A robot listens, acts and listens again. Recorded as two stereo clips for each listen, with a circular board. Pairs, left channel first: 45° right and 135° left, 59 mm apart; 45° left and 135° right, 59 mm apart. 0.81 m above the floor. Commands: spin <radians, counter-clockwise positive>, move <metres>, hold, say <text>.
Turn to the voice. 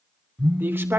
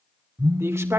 spin -3.05
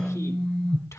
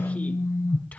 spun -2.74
spin -0.35
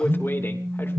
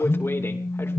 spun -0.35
say Facing the man speaking.